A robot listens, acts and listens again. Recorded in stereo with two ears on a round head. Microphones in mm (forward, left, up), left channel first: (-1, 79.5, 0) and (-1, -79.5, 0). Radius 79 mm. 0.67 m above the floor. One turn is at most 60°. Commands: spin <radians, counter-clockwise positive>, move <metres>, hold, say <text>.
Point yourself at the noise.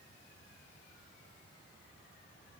hold
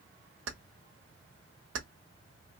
spin -1.05
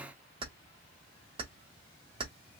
spin -0.52
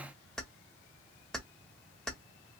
say Facing the keys jangling, under 1 m away.